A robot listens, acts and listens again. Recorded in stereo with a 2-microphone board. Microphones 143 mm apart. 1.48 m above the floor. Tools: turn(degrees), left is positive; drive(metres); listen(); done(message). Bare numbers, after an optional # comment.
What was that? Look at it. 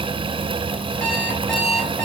turn(30)
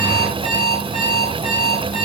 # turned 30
# So it is at 145° left.
turn(145)
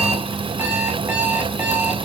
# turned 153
# The alarm clock is now 10° right.
turn(-10)
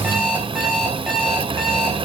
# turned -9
done("Facing the alarm clock.")